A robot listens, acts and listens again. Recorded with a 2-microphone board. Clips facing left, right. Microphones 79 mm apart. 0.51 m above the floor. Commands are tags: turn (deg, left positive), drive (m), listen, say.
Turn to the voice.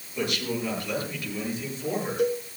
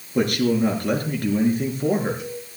<turn deg="-50"/>
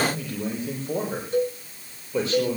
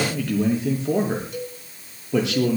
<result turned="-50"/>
<turn deg="-85"/>
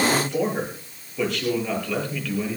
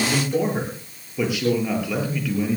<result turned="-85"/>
<turn deg="-10"/>
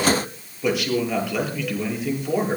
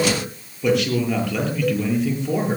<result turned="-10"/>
<say>Facing the man speaking.</say>